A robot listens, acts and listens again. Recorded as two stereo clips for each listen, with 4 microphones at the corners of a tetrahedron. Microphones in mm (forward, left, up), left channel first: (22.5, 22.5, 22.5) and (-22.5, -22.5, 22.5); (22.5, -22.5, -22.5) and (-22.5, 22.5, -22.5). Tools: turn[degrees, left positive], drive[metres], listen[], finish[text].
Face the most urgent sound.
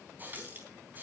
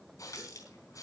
Action: listen[]
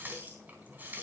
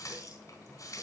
Action: listen[]
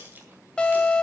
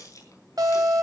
Thought: The alarm: 120° left.
Action: turn[120]
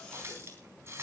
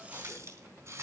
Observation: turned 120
Action: listen[]
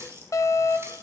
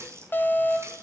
Thought: The alarm is now 10° left.
Action: turn[10]
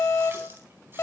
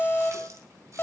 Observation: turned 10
Action: finish[Facing the alarm, 2 to 4 m away.]